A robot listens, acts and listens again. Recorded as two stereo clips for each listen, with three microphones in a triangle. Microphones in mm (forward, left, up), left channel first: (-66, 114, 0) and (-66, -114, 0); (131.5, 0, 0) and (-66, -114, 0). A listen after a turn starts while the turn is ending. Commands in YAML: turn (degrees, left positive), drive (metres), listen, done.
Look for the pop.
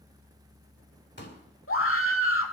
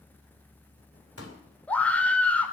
turn: 50
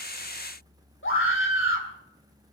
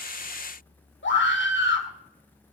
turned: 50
done: "I heard a pop from this way, but can't make it out now."